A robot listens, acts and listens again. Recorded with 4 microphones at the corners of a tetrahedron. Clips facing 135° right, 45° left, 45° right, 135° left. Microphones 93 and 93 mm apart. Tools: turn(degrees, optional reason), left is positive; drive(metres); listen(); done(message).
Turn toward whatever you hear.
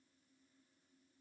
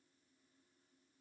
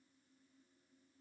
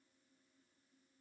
listen()
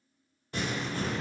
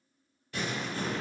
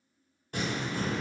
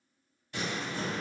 turn(degrees=-80, reason="The crumpling: 80° right.")
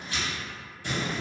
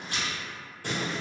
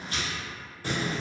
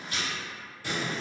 done("Facing the crumpling, 1 to 2 m away.")